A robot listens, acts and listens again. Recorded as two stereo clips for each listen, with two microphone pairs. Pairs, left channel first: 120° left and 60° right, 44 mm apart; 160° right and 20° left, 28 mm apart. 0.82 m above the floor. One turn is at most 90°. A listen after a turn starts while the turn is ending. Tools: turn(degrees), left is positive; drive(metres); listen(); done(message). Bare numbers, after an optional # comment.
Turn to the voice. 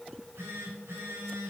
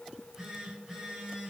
listen()
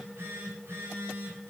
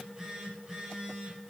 listen()
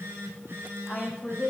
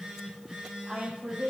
# The woman speaking: 50° left.
turn(50)
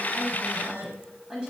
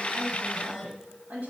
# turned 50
# The woman speaking is now 10° left.
turn(10)
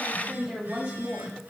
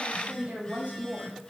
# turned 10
done("Found it: a woman speaking, straight ahead, over 4 m away.")